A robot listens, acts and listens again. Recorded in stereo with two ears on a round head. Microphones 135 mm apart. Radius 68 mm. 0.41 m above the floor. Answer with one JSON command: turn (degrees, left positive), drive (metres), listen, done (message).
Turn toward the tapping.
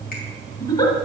{"listen": true}
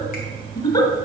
{"listen": true}
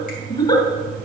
{"done": "I can't make out tapping to turn to."}